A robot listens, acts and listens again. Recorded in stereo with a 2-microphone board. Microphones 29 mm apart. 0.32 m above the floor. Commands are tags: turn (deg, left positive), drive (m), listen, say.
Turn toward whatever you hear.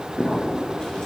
<turn deg="25"/>
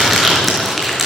<say>Found it: crumpling, straight ahead, over 4 m away.</say>